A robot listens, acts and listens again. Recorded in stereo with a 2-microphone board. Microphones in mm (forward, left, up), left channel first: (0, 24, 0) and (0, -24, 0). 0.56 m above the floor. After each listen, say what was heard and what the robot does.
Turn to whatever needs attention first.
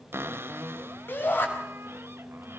The shout: about 50° left or 130° left. Turn 50° left.
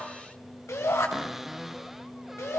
So it is at 80° left. Turn 80° left.
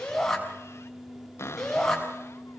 The shout is now 10° left. Turn 10° left.
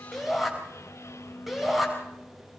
Found it: a shout, straight ahead, over 4 m away.